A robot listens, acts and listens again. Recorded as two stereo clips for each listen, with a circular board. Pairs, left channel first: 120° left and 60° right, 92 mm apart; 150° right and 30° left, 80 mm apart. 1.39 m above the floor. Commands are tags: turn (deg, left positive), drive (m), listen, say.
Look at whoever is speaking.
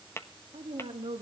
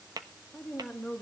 <turn deg="-70"/>
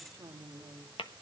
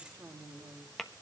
<turn deg="-15"/>
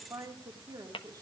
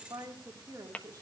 <turn deg="-10"/>
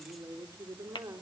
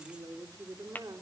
<say>Facing the woman speaking, 2 to 4 m away.</say>